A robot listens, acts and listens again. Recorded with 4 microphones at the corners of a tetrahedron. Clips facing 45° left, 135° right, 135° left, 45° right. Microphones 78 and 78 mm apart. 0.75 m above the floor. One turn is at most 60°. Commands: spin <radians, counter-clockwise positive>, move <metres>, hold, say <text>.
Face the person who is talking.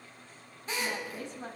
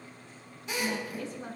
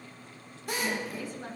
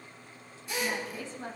spin 0.26
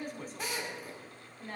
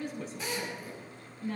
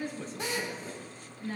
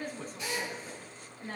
say Found it: a woman speaking, straight ahead.